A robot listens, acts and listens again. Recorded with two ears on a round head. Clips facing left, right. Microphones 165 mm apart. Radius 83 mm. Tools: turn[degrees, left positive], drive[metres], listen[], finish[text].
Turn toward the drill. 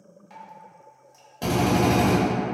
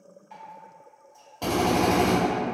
Action: turn[30]
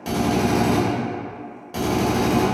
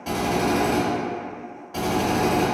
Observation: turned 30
Thought: So it is at 135° left.
Action: turn[135]
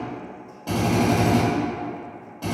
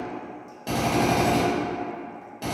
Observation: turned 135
Thought: The drill is now 20° right.
Action: turn[-20]
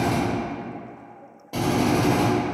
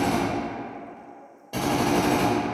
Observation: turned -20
Action: finish[Facing the drill, 1 to 2 m away.]